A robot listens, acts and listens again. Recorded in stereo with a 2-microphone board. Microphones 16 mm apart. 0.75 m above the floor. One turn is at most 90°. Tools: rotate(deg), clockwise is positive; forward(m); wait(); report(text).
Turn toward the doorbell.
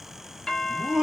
rotate(-55)
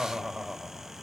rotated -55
wait()
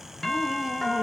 rotate(-40)
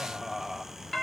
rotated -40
rotate(-15)
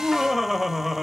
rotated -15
wait()
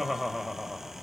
wait()
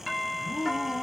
report("Found it: a doorbell, straight ahead.")